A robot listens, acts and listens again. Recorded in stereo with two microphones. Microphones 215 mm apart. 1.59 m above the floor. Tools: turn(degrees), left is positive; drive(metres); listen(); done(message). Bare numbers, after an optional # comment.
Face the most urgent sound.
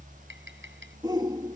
# The shout: about 20° right or 160° right.
turn(-20)
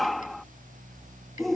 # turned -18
done("Found it: a shout, straight ahead.")